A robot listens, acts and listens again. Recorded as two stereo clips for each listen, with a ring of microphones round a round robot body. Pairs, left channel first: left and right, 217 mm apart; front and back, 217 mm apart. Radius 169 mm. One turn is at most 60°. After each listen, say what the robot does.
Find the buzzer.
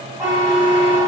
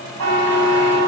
Turn 60° right.
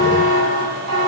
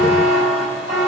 Turn 60° right.
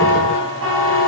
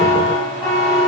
Turn 60° right.
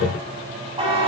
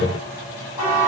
Turn 25° right.
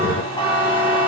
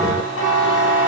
Turn 20° left.
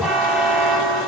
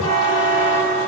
Found it: a buzzer, straight ahead, over 4 m away.